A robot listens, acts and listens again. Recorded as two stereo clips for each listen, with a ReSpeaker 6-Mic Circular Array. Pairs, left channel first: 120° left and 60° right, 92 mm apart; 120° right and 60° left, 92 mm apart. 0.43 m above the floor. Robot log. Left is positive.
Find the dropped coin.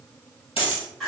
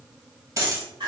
note: The dropped coin: 115° left.
cmd yaw +115
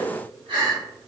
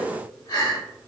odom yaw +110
end: I heard a dropped coin from this way, but can't make it out now.